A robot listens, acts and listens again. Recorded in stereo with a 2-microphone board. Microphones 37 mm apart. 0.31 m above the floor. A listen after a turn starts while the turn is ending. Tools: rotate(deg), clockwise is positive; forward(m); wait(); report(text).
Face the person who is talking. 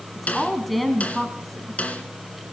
rotate(-30)
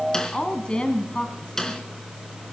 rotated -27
rotate(-150)
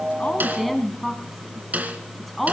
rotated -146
report("Found it: a woman speaking, straight ahead, 2 to 4 m away.")